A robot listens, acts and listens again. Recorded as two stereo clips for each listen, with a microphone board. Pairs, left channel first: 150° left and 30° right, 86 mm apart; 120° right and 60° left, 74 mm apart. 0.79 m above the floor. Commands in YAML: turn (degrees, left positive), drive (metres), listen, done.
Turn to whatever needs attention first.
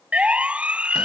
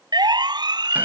turn: 45
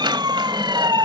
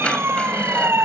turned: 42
done: "Found it: a siren, straight ahead."